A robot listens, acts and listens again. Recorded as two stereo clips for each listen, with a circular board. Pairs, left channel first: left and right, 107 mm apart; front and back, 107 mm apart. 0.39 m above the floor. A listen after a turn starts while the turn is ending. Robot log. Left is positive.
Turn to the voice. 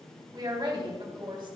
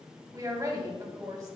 note: The woman speaking: 125° right.
cmd yaw -125
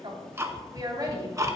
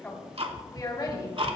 note: The woman speaking is now 45° right.
cmd yaw -45
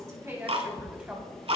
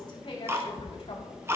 cmd idle
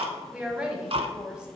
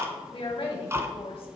note: The woman speaking is now 10° right.
cmd yaw -10
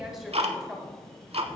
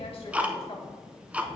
end: Found it: a woman speaking, straight ahead, 2 to 4 m away.